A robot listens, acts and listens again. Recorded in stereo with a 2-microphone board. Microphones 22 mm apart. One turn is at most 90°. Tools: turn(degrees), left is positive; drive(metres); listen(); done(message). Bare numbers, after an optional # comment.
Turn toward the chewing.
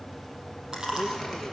# The chewing: about 35° right or 145° right.
turn(-35)
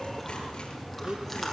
done("Facing the chewing, over 4 m away.")